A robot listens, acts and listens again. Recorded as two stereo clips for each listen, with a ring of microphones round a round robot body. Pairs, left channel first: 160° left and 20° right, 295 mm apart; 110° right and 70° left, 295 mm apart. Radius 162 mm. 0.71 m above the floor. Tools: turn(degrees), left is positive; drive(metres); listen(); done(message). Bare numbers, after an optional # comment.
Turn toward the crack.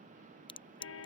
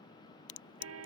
# The crack: 130° right.
turn(-130)
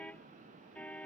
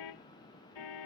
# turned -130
done("Facing where the crack came from. I can't hear it now.")